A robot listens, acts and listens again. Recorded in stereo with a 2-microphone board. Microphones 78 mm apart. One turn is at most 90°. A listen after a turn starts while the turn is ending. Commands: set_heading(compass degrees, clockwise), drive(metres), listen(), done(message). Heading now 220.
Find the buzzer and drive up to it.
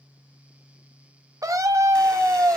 listen()
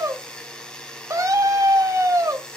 set_heading(190)
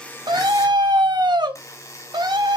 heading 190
set_heading(100)
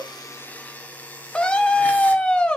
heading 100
set_heading(80)
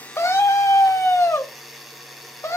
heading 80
drive(1.0)
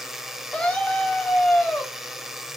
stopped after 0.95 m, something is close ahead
done("Arrived at the buzzer, straight ahead.")